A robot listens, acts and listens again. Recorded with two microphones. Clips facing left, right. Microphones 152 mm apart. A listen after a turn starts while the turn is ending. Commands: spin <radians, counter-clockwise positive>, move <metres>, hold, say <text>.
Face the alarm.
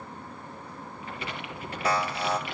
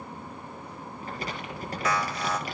spin 0.52
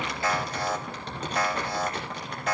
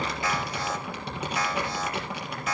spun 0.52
spin 2.01
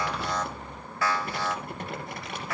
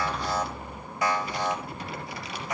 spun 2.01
spin -0.35
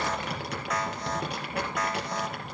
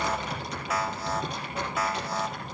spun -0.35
say Found it: an alarm, straight ahead.